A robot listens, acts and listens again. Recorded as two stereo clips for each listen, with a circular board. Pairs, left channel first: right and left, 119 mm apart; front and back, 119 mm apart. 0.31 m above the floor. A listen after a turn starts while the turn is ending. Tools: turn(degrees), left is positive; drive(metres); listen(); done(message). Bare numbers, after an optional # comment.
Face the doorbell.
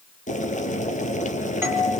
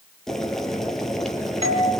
# The doorbell: 160° left.
turn(160)
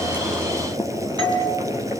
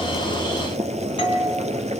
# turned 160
# The doorbell is now 40° left.
turn(40)
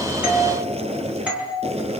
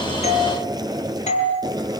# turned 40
# The doorbell is now 10° left.
turn(10)
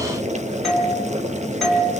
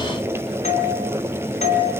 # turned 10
done("Facing the doorbell.")